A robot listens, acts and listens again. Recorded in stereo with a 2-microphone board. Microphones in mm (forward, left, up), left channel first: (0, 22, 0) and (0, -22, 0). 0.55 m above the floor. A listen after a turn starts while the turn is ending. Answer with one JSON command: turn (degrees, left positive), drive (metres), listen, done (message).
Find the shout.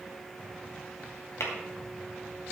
{"listen": true}
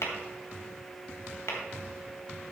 {"listen": true}
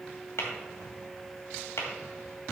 {"done": "I can't make out a shout to turn to."}